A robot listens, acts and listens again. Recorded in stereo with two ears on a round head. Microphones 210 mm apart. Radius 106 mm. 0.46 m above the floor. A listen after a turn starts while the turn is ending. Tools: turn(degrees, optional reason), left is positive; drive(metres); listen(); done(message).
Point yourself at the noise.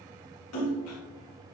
turn(degrees=65, reason="The splash: about 65° left or 115° left.")
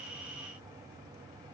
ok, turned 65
listen()
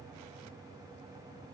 done("I heard a splash, but can't make it out now. It was about straight ahead or 50° left.")